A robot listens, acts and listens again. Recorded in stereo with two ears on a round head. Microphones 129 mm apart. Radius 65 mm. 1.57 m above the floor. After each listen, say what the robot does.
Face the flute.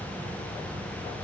Keep listening.
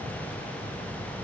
Keep listening.
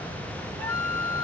Turn 15° left.
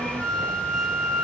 Facing the flute.